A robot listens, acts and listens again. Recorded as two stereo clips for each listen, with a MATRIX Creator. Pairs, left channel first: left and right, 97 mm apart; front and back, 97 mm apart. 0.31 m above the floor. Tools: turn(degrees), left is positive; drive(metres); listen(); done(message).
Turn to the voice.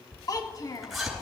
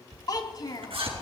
turn(degrees=45)
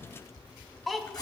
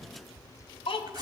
done("Found it: a child speaking, straight ahead.")